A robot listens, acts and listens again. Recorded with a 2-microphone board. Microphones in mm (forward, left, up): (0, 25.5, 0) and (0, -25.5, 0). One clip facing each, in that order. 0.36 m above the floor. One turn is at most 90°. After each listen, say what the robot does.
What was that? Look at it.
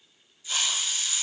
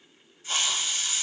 Turn 50° right.
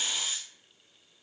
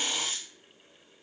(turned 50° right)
Turn 70° right.
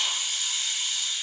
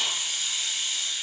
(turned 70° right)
Facing the hiss.